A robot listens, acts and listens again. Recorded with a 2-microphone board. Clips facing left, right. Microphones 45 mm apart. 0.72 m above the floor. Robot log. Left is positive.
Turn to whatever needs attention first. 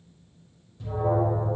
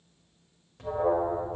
note: The alarm: about 70° right or 110° right.
cmd yaw -70
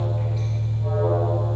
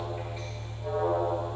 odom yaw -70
end: Found it: an alarm, straight ahead, 2 to 4 m away.